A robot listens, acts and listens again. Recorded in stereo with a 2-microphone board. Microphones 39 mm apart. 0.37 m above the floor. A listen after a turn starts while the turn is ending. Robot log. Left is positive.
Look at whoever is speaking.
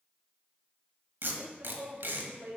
note: The woman speaking: about 45° right or 135° right.
cmd yaw -45
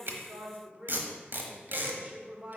note: So it is at 30° right.
cmd yaw -30
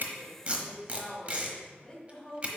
note: The woman speaking is now 15° left.
cmd yaw +15
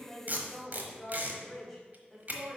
end: Found it: a woman speaking, straight ahead.